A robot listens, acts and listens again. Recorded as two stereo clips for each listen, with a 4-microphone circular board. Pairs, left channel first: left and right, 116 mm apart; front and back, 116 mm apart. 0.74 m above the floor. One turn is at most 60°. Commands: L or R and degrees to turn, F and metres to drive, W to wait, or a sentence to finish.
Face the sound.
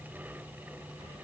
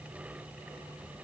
W
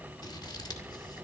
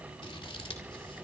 L40
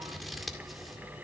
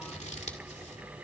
Found it: scissors, straight ahead, 2 to 4 m away.